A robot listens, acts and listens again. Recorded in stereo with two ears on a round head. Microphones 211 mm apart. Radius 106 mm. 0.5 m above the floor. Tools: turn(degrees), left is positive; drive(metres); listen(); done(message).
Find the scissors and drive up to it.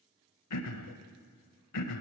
listen()
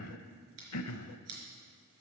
turn(degrees=-70)
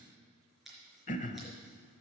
drive(metres=1.0)
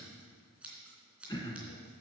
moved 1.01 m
drive(metres=1.0)
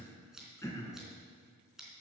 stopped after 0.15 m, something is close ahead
done("Something is in my way. I am facing the scissors but have not reached it.")